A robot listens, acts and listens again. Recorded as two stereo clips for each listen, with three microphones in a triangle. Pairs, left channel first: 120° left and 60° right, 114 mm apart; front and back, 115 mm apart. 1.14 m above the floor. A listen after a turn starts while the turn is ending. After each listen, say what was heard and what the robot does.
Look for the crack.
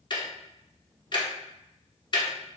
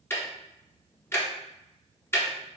Keep listening.
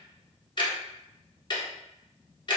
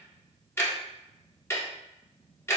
Keep listening.
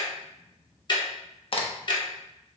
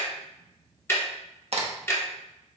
The crack: 155° left. Turn 155° left.
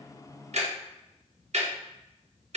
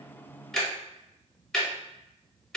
I heard a crack from this way, but can't make it out now.